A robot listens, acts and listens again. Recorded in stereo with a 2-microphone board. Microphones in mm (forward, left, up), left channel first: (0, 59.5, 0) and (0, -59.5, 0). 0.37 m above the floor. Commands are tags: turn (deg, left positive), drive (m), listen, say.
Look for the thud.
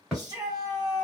<turn deg="30"/>
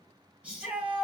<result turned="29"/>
<listen/>
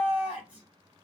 <say>I heard a thud, but can't make it out now. It was about 25° right or 150° left.</say>